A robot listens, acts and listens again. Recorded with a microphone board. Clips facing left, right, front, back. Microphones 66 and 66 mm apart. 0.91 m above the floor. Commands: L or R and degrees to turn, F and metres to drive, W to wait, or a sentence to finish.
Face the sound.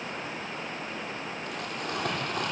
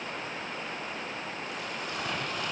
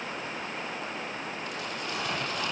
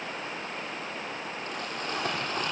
L130
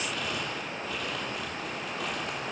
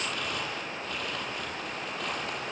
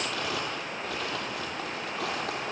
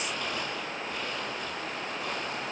Found it: crumpling, straight ahead.